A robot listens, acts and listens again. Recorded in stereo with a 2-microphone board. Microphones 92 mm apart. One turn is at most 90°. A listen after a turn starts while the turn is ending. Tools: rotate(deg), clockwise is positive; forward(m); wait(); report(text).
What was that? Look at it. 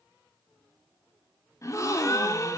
rotate(-35)
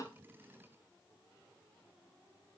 wait()
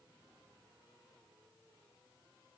report("I heard a gasp, but can't make it out now. It was about straight ahead or 110° left.")